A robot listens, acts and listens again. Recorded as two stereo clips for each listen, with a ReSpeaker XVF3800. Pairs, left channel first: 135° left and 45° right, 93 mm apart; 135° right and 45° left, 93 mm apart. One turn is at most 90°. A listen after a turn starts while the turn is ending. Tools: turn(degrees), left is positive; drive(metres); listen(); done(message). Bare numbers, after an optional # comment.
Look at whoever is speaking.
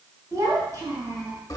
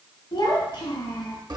# The child speaking: 100° right.
turn(-90)
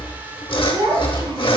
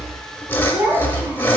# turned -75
# The child speaking is now 25° right.
turn(-25)
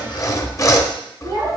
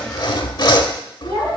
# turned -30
done("Found it: a child speaking, straight ahead, 2 to 4 m away.")